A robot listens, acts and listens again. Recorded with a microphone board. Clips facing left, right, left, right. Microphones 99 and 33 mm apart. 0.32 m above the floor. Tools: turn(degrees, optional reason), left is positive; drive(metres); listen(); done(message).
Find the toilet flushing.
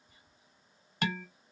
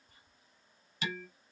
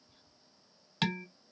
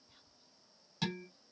listen()
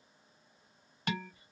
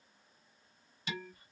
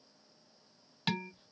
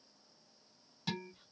listen()
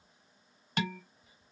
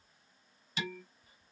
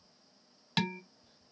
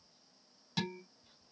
done("I can't make out a toilet flushing, only dishes clattering.")